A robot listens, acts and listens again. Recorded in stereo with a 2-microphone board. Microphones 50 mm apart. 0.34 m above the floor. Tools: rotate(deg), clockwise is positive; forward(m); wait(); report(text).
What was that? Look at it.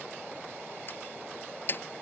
rotate(-45)
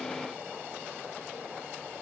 wait()
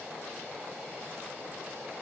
report("I heard a door slam, but can't make it out now. It was about straight ahead or 90° left.")